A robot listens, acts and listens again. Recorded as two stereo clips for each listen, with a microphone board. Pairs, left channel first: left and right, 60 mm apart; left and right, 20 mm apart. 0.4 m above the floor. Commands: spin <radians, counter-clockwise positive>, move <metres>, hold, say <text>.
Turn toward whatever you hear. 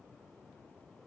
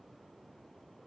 hold
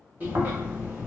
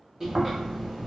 spin -0.52
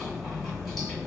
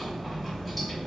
say Facing the chewing, 1 to 2 m away.